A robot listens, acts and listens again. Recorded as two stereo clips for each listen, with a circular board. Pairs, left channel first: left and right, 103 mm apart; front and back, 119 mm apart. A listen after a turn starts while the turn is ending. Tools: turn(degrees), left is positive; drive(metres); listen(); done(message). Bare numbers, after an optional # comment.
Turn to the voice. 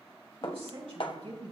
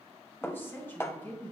# The woman speaking: 70° right.
turn(-70)
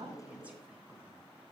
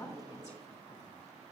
listen()
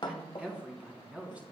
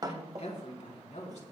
# The woman speaking is now 10° right.
turn(-10)
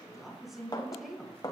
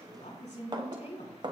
done("Found it: a woman speaking, straight ahead.")